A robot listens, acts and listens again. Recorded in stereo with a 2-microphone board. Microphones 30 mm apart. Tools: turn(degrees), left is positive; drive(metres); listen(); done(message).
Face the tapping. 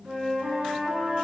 listen()
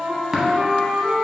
turn(degrees=-30)
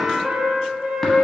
listen()
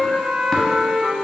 listen()
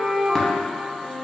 done("I heard tapping, but can't make it out now. It was about 20° left or 140° right.")